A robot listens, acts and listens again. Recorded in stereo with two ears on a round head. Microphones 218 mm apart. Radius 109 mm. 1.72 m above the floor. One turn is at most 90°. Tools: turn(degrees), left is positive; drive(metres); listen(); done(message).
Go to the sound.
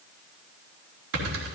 turn(degrees=-60)
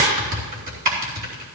turn(degrees=-45)
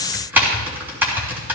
turn(degrees=-10)
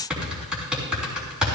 drive(metres=1.0)
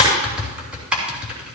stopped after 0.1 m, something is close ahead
done("Something is in my way. I am facing the typing on a keyboard but have not reached it.")